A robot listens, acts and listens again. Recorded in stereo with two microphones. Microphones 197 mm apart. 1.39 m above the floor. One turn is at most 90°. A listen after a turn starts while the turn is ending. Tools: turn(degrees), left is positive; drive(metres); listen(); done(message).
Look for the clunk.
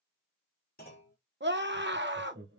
turn(degrees=50)
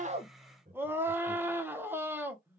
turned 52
listen()
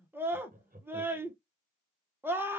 done("I heard a clunk, but can't make it out now. It was about straight ahead or 80° left.")